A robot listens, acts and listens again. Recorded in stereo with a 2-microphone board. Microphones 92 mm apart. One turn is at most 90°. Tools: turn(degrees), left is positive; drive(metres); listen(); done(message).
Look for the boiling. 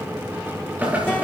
turn(degrees=-20)
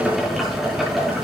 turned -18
done("Found it: boiling, straight ahead, over 4 m away.")